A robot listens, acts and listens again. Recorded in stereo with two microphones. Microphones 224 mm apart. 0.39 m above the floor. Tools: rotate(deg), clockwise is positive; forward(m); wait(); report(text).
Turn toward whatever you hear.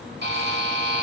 rotate(50)
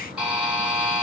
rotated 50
report("Found it: a buzzer, straight ahead, 2 to 4 m away.")